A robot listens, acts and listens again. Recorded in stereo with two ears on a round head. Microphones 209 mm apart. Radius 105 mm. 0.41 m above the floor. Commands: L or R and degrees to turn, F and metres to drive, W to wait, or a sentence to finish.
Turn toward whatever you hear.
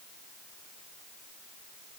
W
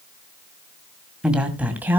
R30
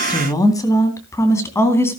L10
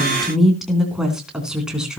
Facing the woman speaking, 2 to 4 m away.